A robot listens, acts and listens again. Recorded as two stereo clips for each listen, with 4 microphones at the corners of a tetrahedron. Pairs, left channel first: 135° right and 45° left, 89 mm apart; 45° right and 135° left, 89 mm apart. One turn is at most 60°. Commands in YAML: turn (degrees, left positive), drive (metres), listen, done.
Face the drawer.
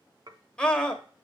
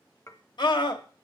listen: true
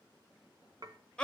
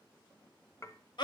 listen: true
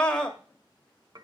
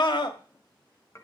done: "I can't make out a drawer, only dishes clattering and a scream."